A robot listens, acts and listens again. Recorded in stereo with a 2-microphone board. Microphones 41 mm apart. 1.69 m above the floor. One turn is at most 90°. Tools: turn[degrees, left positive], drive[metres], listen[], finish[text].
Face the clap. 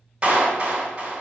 Thought: The clap: about 30° right or 150° right.
Action: turn[-30]
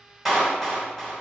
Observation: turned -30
Action: finish[Facing the clap.]